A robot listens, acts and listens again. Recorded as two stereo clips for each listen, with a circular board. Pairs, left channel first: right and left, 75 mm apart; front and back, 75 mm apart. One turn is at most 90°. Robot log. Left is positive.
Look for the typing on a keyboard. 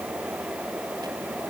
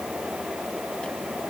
cmd idle
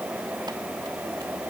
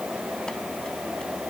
cmd idle
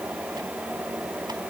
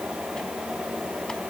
end: I can't make out typing on a keyboard.